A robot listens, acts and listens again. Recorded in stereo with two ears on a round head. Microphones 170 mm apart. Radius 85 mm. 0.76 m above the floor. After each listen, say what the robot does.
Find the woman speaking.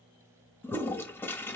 Keep listening.
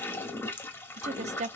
Turn 35° right.
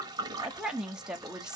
Facing the woman speaking, under 1 m away.